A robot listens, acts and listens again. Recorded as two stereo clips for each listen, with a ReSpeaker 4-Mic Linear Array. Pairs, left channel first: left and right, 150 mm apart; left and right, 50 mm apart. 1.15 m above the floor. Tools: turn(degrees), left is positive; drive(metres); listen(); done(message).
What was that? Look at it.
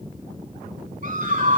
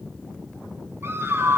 turn(degrees=-70)
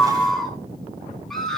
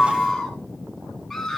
done("Found it: a scream, straight ahead, over 4 m away.")